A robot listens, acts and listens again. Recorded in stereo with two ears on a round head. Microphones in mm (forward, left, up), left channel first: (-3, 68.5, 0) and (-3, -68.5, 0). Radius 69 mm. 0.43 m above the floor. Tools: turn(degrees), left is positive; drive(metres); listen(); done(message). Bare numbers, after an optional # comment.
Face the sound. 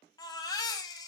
# The baby crying: about 25° left or 155° left.
turn(25)
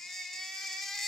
done("Found it: a baby crying, straight ahead, 1 to 2 m away.")